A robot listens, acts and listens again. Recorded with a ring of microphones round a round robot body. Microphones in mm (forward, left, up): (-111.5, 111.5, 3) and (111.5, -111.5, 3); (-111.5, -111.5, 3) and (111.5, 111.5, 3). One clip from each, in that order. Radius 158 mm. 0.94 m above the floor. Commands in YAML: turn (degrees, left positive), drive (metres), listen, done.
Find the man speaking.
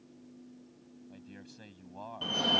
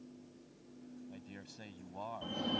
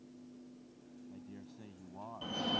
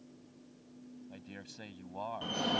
turn: 40
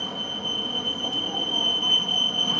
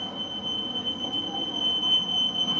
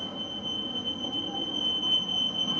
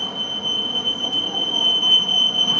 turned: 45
listen: true
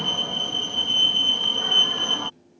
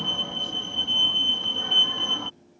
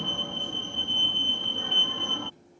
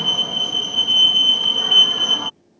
listen: true
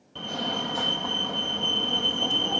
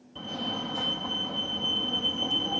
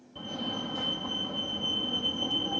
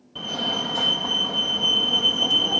done: "I heard a man speaking from this way, but can't make it out now."